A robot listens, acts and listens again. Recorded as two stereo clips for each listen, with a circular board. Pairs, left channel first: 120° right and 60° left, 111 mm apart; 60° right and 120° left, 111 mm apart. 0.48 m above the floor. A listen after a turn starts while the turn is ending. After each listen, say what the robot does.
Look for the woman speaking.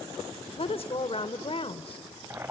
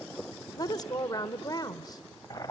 Turn 105° right.
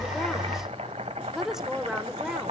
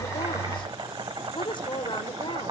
Turn 25° right.
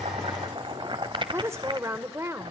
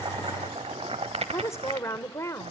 Found it: a woman speaking, straight ahead.